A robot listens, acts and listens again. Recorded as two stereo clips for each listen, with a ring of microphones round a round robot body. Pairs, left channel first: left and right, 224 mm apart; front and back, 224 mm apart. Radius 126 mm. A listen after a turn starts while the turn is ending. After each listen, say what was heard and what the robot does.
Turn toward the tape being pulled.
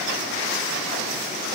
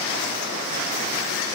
Keep listening.
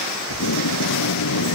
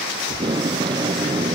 The tape being pulled: 110° left. Turn 110° left.
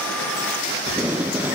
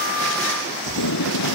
Found it: tape being pulled, straight ahead.